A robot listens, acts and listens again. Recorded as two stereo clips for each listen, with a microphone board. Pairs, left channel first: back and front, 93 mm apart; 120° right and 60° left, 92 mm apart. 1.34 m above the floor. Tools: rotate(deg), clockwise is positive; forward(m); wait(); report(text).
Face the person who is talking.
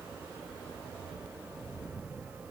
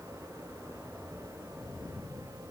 wait()
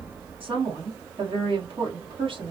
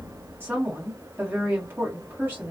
rotate(10)
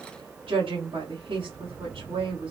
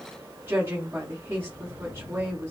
report("Found it: a woman speaking, straight ahead, 1 to 2 m away.")